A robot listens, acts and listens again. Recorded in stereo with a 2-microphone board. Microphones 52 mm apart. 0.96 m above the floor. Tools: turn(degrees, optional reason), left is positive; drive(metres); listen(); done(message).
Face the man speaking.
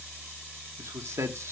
turn(degrees=-90)
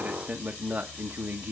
turn(degrees=-45, reason="So it is at 45° right.")
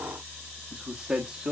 turn(degrees=-25, reason="The man speaking is now 25° right.")
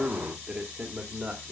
turn(degrees=-25, reason="The man speaking is now 25° right.")
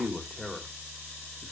done("Facing the man speaking, 2 to 4 m away.")